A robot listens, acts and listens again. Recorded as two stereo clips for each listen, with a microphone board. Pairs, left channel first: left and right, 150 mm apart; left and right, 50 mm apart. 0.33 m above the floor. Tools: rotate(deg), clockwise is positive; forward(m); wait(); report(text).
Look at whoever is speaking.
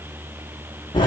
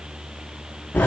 wait()
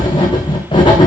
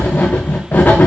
wait()
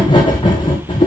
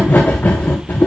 report("I can't make out anyone speaking to turn to.")